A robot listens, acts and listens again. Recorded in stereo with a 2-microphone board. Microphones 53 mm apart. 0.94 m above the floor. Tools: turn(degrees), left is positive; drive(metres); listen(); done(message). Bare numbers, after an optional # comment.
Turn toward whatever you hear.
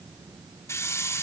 # The hiss: about 60° left or 120° left.
turn(60)
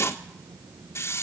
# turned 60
# So it is at 55° left.
turn(55)
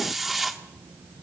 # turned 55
done("Facing the hiss, 1 to 2 m away.")